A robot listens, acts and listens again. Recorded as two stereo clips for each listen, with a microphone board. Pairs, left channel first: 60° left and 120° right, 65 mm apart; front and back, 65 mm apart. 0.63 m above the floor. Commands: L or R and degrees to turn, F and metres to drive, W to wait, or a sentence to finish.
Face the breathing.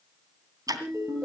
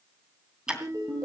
W
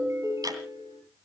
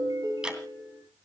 W
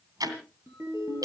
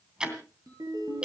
I can't make out breathing, only a ringtone and ticking.